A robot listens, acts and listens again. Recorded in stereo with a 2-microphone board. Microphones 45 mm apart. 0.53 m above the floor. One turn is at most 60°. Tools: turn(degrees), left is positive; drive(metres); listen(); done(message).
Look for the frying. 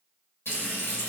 turn(degrees=60)
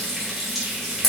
done("Found it: frying, straight ahead.")